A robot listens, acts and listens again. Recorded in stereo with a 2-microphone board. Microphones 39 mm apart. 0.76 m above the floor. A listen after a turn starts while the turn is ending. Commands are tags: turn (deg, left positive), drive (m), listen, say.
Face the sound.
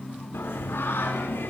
<turn deg="75"/>
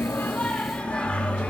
<turn deg="30"/>
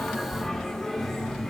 <say>Found it: singing, straight ahead, 1 to 2 m away.</say>